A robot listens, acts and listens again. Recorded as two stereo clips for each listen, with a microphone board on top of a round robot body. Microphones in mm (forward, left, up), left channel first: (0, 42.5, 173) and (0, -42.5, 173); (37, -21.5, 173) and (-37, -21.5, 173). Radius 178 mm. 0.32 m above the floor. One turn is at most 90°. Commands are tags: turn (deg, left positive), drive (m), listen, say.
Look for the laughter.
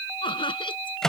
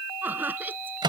<turn deg="90"/>
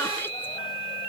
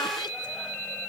<turn deg="25"/>
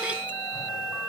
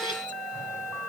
<listen/>
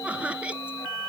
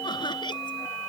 <turn deg="-15"/>
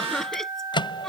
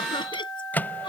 <say>Facing the laughter.</say>